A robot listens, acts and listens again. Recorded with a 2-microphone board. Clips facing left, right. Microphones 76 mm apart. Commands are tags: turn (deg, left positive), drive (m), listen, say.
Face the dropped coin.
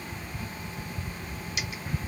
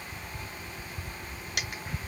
<turn deg="-60"/>
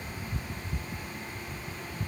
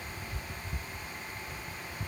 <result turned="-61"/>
<listen/>
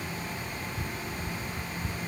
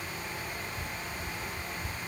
<say>I heard a dropped coin, but can't make it out now. It was about 5° left or 60° right.</say>